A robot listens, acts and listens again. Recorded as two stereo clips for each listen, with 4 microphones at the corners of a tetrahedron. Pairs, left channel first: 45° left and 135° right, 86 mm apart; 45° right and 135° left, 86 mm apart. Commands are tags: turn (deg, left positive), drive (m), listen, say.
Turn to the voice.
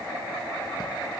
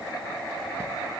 <listen/>
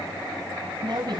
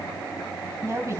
<turn deg="-165"/>
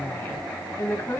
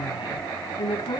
<turn deg="-20"/>
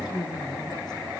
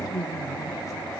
<say>Facing the woman speaking.</say>